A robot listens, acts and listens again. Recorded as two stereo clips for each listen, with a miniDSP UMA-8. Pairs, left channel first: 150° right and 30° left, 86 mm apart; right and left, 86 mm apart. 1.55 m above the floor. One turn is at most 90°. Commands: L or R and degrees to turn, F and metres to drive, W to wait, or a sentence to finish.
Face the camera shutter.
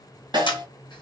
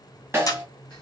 R90
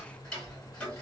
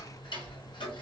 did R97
R40
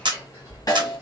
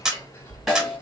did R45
L10
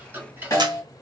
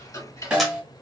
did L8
W
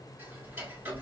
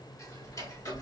W
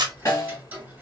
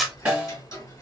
Facing the camera shutter, under 1 m away.